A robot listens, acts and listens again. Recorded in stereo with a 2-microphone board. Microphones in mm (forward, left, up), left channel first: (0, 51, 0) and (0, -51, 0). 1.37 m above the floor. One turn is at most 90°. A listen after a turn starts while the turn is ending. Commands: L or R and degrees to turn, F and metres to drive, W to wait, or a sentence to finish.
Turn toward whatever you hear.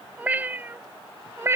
R25
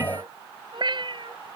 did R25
R90
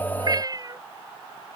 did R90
R35
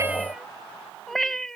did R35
Found it: a cat meowing, straight ahead.